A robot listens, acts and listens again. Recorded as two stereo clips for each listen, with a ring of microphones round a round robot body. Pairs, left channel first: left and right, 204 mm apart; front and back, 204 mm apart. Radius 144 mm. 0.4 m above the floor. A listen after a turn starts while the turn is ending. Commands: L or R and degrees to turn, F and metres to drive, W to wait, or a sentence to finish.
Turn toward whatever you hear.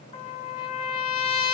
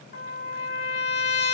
L40
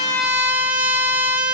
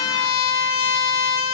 R10
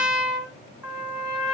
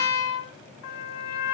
Found it: a trumpet, straight ahead.